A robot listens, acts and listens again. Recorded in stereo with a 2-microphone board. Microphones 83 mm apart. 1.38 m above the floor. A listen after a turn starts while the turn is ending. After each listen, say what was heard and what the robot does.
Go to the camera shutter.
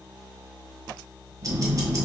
Keep listening.
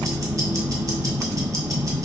Keep listening.
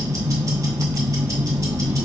I can't make out a camera shutter, only ticking.